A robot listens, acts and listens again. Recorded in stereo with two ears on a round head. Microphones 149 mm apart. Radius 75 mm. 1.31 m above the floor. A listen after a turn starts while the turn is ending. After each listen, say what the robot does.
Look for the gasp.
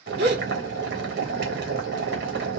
Turn 60° right.
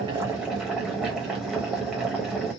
Keep listening.
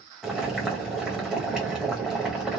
I heard a gasp, but can't make it out now. It was about straight ahead or 60° right.